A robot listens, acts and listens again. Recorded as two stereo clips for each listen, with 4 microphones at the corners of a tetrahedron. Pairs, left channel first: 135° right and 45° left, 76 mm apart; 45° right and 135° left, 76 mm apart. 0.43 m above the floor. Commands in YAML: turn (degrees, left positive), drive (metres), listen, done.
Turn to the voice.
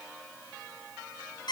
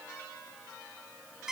listen: true
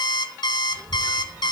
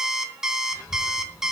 done: "Facing the child speaking, 2 to 4 m away."